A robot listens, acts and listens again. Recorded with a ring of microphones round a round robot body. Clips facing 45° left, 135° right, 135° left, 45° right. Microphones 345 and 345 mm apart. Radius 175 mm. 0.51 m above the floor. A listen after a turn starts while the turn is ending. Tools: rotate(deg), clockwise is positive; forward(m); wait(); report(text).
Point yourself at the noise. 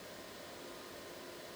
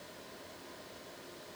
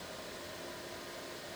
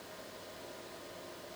wait()
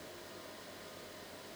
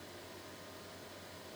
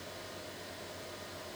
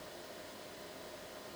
wait()
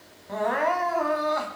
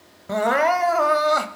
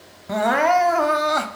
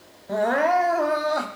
rotate(160)
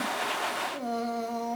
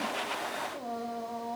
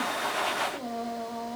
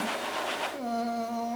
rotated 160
report("Facing the crying.")